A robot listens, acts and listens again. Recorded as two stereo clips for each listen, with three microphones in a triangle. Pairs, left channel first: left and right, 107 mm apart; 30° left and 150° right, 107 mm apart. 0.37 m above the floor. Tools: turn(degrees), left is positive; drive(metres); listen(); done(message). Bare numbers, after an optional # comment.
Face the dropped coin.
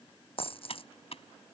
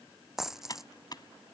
# The dropped coin: 125° left.
turn(125)
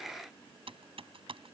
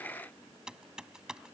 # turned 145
# Nothing new. It was at 20° right.
turn(-20)
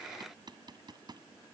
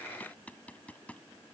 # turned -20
done("Facing where the dropped coin came from. I can't hear it now.")